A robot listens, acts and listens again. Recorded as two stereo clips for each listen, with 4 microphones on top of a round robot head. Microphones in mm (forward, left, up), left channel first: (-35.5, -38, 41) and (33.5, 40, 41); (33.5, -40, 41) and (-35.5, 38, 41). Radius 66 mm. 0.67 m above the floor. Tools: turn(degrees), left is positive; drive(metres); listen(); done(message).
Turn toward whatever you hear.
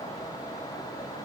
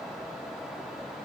listen()
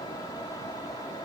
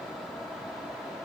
listen()
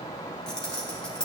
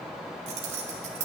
turn(degrees=145)
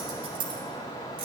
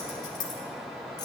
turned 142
done("Found it: keys jangling, straight ahead.")